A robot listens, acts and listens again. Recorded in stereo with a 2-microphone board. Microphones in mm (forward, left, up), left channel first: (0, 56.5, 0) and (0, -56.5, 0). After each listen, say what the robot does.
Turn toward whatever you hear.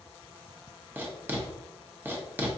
Turn 15° right.
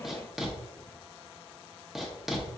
Found it: writing, straight ahead, under 1 m away.